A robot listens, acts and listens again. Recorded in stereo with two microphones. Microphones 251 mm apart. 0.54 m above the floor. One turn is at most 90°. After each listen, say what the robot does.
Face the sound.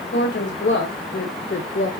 Turn 55° left.
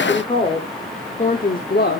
Turn 45° left.
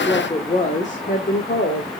Turn 45° left.
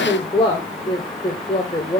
Turn 20° left.
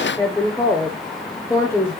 Turn 10° left.
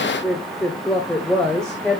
Facing the woman speaking.